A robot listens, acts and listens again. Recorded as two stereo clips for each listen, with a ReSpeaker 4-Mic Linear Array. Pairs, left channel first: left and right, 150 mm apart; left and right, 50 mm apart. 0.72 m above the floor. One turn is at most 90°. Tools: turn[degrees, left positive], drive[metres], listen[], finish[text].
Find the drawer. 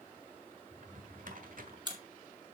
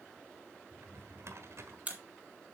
Thought: The drawer: about 60° right or 120° right.
Action: turn[-60]
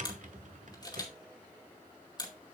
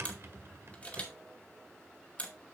Thought: So it is at 55° right.
Action: turn[-55]
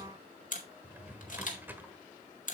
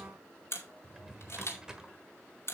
Thought: The drawer is now 10° right.
Action: turn[-10]
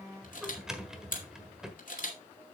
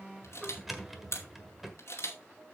Action: finish[Facing the drawer, 1 to 2 m away.]